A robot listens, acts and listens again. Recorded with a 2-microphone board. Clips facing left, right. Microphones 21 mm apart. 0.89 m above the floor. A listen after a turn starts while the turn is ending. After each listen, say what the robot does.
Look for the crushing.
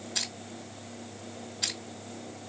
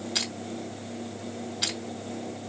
Turn 60° right.
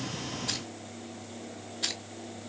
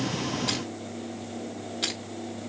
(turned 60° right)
Turn 55° right.
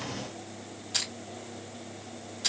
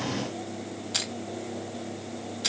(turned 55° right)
Turn 15° right.
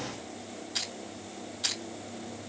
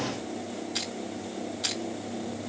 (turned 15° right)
Found it: crushing, straight ahead.